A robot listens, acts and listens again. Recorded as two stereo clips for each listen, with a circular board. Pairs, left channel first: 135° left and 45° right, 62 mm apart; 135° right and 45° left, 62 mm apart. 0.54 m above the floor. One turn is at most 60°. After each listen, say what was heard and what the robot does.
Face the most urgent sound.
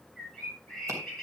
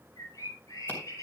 Keep listening.
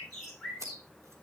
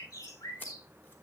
Keep listening.
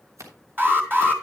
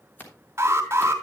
Facing the alarm, 2 to 4 m away.